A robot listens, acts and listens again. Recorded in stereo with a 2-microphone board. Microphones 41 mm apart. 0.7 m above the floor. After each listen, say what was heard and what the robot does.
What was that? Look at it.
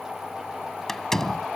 Turn 30° left.
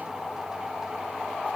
Keep listening.
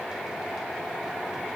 I heard a door slam, but can't make it out now. It was about 20° right or 140° left.